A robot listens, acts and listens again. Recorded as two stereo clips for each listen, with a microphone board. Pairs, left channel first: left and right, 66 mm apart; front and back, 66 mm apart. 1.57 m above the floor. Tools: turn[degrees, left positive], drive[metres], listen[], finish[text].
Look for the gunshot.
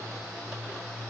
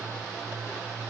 Action: listen[]
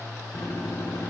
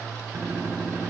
Thought: The gunshot: 110° left.
Action: turn[110]
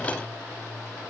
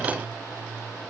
Action: finish[Facing where the gunshot came from. I can't hear it now.]